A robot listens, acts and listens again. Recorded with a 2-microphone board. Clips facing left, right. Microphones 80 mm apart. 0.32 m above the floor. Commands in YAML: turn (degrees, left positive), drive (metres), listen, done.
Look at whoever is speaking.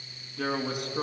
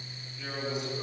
turn: 65
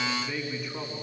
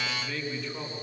turn: 10
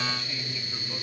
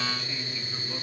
done: "Found it: a man speaking, straight ahead, 2 to 4 m away."